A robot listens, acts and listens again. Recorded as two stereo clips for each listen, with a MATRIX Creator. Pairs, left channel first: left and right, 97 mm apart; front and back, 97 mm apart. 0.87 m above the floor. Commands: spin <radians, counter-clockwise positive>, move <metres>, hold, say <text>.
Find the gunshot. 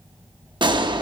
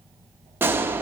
spin -2.01
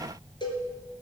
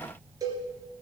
say Facing where the gunshot came from. I can't hear it now.